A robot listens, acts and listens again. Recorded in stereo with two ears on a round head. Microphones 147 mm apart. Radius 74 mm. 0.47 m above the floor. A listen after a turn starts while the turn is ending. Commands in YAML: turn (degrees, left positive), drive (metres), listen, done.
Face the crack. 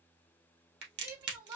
turn: -75
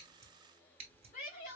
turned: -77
listen: true
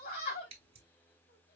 done: "I heard a crack, but can't make it out now. It was about 5° left or 30° right."